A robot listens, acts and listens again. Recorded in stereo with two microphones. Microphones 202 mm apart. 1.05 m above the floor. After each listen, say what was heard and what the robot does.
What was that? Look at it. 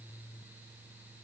Keep listening.
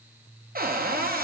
The cupboard door: about 50° right or 130° right. Turn 50° right.
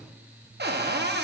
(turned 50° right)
So it is at 75° right. Turn 75° right.
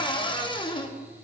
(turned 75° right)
The cupboard door is now 25° left. Turn 25° left.
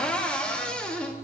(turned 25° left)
Found it: a cupboard door, straight ahead, under 1 m away.